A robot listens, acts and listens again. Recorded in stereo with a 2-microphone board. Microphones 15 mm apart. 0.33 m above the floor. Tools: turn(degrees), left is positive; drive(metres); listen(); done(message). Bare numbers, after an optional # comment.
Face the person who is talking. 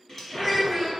turn(-30)
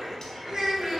# So it is at 145° right.
turn(-145)
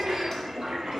listen()
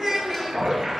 # The child speaking is now 40° right.
turn(-40)
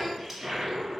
listen()
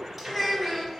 done("Found it: a child speaking, straight ahead, 1 to 2 m away.")